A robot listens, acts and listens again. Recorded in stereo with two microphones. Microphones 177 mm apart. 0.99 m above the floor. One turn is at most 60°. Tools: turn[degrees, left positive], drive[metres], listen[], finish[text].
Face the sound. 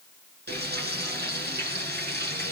Thought: The frying: about 70° right or 110° right.
Action: turn[-60]
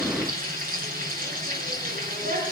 Thought: So it is at 50° right.
Action: turn[-50]
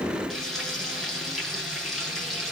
Action: finish[Found it: frying, straight ahead, over 4 m away.]